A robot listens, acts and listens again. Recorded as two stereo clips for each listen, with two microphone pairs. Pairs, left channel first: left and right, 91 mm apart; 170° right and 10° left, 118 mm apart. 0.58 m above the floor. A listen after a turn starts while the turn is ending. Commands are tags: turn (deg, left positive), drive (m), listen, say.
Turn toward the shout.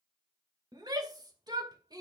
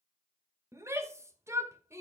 <turn deg="-55"/>
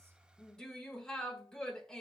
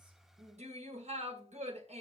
<say>Found it: a shout, straight ahead, 2 to 4 m away.</say>